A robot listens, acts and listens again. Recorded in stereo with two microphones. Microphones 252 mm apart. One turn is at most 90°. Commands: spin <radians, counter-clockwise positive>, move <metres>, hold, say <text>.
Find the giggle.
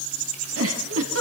spin -1.22
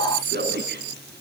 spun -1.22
spin -0.79
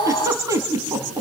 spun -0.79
spin -0.17
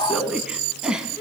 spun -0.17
say Facing the giggle.